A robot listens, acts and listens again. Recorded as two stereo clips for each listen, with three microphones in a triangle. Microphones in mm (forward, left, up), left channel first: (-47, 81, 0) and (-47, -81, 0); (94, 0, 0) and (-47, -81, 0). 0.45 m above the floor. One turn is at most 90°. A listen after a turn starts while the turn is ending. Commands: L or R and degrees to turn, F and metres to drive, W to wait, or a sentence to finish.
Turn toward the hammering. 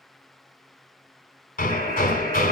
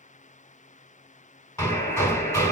L90
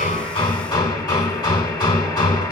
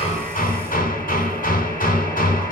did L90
L30
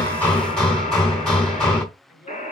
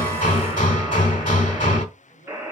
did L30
Facing the hammering.